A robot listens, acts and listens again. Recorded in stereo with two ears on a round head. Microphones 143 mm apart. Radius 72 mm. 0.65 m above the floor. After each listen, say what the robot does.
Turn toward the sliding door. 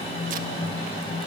Keep listening.
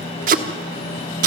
Keep listening.
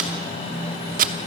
I can't make out a sliding door, only tape being pulled.